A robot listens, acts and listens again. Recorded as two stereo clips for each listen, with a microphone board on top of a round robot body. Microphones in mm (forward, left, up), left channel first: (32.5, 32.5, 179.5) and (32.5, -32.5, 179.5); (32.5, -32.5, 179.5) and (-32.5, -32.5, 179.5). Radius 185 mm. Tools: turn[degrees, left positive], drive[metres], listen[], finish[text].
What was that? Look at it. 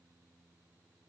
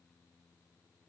Action: listen[]
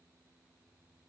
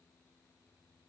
Action: listen[]
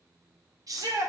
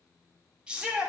Thought: The shout: 105° right.
Action: turn[-105]
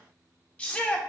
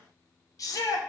Thought: The shout is now 20° left.
Action: turn[20]
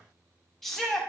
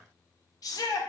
Action: finish[Facing the shout.]